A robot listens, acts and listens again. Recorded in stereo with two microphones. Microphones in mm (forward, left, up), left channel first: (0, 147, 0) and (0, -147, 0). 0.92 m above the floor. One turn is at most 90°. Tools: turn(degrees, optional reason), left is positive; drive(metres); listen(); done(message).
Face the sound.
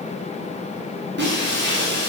turn(degrees=-35, reason="The breaking glass: about 35° right or 145° right.")
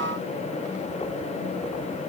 listen()
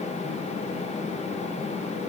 done("I heard breaking glass, but can't make it out now. It was about straight ahead or 110° right.")